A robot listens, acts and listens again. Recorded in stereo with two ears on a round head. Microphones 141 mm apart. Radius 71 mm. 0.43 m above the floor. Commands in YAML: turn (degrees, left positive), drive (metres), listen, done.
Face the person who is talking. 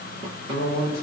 turn: 70
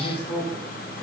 turn: 35
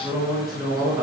done: "Facing the man speaking."